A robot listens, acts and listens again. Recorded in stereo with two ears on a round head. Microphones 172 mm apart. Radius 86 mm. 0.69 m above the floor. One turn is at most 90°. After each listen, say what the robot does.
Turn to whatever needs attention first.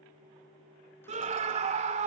Turn 35° right.
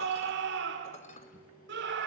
Turn 90° right.
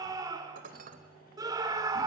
Turn 20° right.
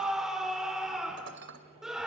Facing the scream, 2 to 4 m away.